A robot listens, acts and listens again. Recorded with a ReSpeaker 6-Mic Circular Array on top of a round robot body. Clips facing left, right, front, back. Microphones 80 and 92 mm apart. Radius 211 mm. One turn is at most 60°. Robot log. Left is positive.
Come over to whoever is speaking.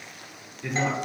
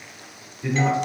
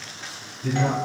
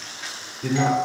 note: The man speaking: 175° left.
cmd yaw +60
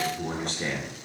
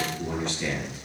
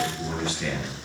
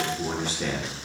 note: The man speaking is now 130° left.
cmd yaw +60
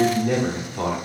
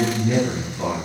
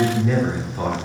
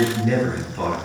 note: The man speaking is now 75° left.
cmd yaw +60
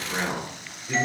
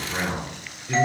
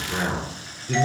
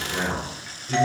cmd fwd 1.0
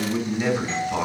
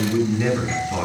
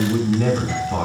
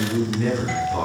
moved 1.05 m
cmd fwd 1.0
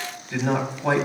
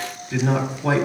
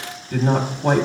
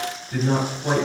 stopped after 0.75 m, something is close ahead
end: Arrived at the man speaking, straight ahead.